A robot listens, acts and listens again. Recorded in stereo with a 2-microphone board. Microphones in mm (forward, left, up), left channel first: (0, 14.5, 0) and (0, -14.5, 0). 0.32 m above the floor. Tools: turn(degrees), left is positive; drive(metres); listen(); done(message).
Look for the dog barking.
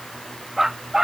turn(degrees=-20)
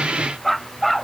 turn(degrees=-30)
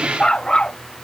turn(degrees=25)
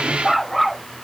done("Facing the dog barking.")